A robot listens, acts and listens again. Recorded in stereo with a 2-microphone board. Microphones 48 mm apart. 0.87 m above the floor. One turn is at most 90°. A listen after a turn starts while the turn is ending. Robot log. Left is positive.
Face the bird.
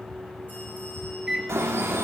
note: The bird: about 70° right or 110° right.
cmd yaw -70
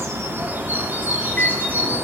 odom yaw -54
note: So it is at 45° right.
cmd yaw -45
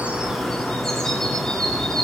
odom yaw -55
note: The bird is now 10° left.
cmd yaw +10
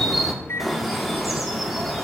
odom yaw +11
end: Facing the bird, 2 to 4 m away.